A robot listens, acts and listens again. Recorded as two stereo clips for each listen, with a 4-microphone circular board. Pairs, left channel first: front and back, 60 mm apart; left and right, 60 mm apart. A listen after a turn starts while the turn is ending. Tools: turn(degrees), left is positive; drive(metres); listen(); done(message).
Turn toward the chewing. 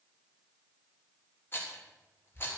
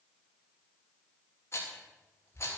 listen()
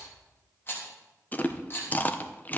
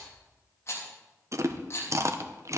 turn(degrees=-60)
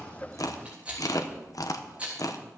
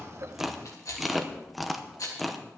done("Found it: chewing, straight ahead.")